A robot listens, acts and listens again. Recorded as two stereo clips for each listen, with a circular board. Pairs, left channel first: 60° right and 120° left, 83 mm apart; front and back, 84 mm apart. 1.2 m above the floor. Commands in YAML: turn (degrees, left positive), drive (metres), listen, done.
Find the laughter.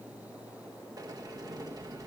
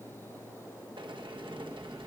listen: true
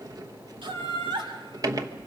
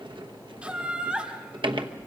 turn: 100
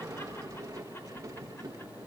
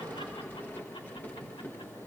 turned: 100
listen: true
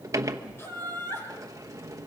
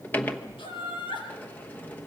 done: "Facing the laughter, over 4 m away."